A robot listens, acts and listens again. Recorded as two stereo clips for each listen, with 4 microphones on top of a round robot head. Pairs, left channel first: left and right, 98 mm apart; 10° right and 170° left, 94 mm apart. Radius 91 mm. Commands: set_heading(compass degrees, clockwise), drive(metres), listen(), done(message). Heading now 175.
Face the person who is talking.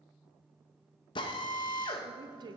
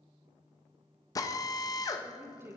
set_heading(300)
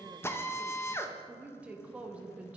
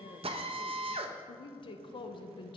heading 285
set_heading(295)
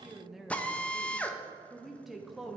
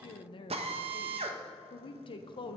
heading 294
done("Found it: a woman speaking, straight ahead, 1 to 2 m away.")